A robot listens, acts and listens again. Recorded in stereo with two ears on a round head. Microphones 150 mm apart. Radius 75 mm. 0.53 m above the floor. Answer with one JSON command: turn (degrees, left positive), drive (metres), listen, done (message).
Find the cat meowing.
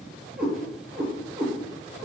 {"turn": -30}
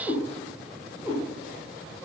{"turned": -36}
{"turn": 20}
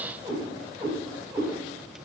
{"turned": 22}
{"turn": -10}
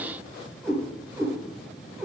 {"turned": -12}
{"done": "Facing the cat meowing."}